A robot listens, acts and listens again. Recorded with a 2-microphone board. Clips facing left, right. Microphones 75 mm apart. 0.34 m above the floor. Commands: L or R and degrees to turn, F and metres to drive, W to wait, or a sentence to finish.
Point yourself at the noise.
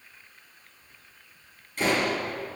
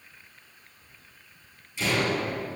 L50
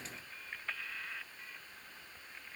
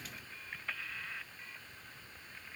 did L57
W
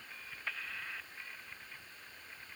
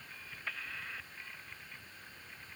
I heard a door slam, but can't make it out now. It was about 5° right or 70° left.